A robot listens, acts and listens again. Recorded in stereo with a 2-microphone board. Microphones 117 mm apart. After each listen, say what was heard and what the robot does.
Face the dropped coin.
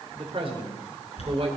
The dropped coin: about 60° left or 120° left. Turn 60° left.
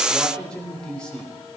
Keep listening.
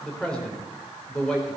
I heard a dropped coin, but can't make it out now. It was about straight ahead or 60° left.